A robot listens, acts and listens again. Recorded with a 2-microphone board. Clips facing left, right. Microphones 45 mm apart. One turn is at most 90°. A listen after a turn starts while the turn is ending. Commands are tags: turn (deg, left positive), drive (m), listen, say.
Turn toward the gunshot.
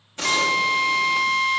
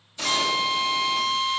<turn deg="55"/>
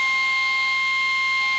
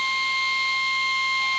<listen/>
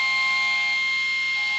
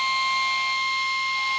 <say>I heard a gunshot, but can't make it out now. It was about straight ahead or 70° left.</say>